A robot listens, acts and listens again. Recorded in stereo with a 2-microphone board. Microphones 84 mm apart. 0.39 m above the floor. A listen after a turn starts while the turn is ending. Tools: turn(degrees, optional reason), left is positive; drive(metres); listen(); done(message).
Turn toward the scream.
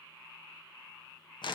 listen()
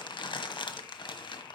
listen()
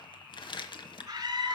turn(degrees=-45, reason="The scream: about 45° right or 135° right.")
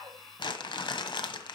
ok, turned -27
listen()
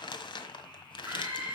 turn(degrees=-20, reason="So it is at 20° right.")
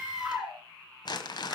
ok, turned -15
turn(degrees=-10, reason="The scream is now 10° right.")
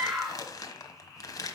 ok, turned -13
done("Facing the scream.")